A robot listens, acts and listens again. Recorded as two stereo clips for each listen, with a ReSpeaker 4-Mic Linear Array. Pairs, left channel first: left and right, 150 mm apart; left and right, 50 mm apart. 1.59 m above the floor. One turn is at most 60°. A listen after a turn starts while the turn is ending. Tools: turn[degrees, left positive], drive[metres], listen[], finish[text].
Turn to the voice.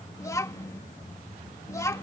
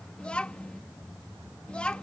Thought: The child speaking: about 20° left or 160° left.
Action: turn[20]
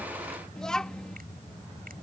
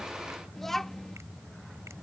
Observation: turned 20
Action: finish[Facing the child speaking.]